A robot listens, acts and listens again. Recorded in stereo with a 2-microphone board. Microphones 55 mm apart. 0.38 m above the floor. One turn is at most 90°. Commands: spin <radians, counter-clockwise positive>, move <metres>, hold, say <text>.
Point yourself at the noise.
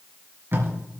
spin -0.79
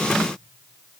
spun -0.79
hold
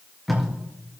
say Facing the tape being pulled, 2 to 4 m away.